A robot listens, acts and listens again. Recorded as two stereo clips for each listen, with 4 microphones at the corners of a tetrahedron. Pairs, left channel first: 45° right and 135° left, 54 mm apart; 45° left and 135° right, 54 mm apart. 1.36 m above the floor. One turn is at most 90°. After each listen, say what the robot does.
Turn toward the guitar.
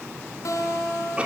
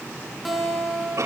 Turn 45° right.
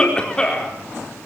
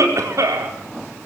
Keep listening.
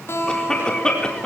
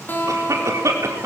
Turn 10° right.
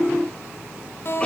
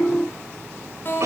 Facing the guitar, over 4 m away.